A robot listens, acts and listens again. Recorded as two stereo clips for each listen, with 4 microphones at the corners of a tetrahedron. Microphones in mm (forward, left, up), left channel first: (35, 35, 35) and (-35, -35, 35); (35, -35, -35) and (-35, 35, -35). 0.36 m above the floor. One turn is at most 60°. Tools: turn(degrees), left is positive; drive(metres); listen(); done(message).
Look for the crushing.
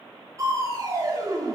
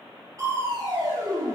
turn(degrees=60)
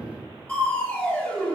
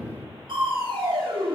turn(degrees=60)
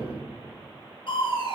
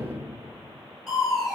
turn(degrees=45)
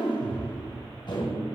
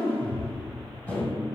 turn(degrees=20)
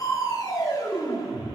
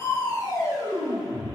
done("Found it: crushing, straight ahead.")